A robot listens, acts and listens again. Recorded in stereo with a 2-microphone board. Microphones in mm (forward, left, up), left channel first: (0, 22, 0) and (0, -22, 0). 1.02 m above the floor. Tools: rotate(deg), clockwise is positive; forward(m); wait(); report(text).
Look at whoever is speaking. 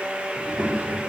rotate(25)
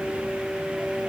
wait()
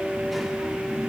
wait()
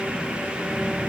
report("Found it: a child speaking, straight ahead.")